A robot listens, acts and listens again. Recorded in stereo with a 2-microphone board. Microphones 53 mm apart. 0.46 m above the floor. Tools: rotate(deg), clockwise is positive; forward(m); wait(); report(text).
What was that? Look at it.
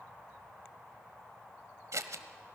rotate(90)
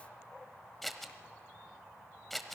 report("Facing the scissors, 1 to 2 m away.")